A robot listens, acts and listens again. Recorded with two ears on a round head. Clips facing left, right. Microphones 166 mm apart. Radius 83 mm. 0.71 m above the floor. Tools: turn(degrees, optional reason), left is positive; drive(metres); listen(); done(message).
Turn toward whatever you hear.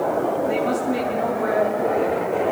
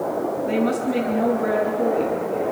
turn(degrees=-35, reason="The woman speaking: about 35° right or 145° right.")
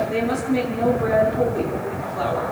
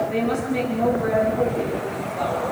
done("Found it: a woman speaking, straight ahead, over 4 m away.")